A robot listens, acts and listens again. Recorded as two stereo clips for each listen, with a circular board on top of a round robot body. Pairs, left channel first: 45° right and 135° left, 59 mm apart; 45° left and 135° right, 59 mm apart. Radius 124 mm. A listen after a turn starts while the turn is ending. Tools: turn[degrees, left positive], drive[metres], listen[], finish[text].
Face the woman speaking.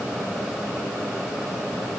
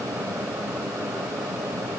Action: listen[]
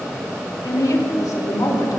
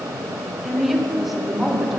Thought: The woman speaking: 45° right.
Action: turn[-45]
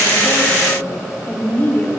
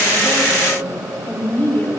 Action: finish[Facing the woman speaking.]